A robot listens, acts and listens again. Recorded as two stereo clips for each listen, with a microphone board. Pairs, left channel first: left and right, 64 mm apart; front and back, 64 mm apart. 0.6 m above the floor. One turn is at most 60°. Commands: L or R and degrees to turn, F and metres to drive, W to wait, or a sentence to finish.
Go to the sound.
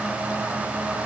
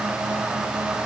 W
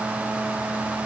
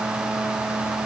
W
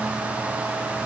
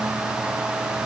I can't make out anything to turn to.